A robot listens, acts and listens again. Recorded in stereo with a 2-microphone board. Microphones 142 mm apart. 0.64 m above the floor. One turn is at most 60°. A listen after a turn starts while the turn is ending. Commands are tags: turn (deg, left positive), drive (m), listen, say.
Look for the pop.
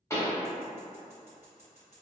<turn deg="20"/>
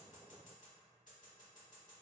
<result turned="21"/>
<listen/>
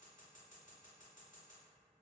<say>I heard a pop, but can't make it out now. It was about straight ahead or 140° left.</say>